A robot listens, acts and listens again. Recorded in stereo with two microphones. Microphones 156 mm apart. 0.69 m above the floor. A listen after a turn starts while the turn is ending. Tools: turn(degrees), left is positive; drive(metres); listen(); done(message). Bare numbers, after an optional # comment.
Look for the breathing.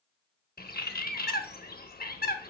listen()
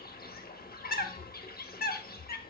# The breathing: about 25° left or 155° left.
turn(25)
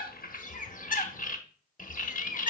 done("Facing the breathing, 1 to 2 m away.")